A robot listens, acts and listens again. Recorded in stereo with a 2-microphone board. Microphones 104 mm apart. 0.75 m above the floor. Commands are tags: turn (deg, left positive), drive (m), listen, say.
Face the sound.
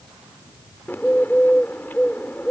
<turn deg="20"/>
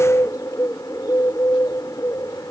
<turn deg="145"/>
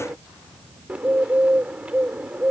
<turn deg="-10"/>
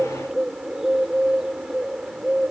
<say>Found it: a bird, straight ahead.</say>